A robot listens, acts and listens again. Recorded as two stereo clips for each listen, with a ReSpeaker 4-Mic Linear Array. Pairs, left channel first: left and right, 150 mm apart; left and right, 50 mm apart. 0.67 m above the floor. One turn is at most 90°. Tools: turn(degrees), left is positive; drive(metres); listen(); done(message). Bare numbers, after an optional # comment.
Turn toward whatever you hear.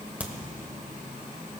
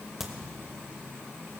turn(-30)
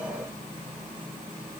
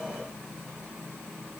listen()
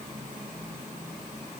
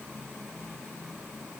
done("I heard a crack, but can't make it out now. It was about 20° left or 140° right.")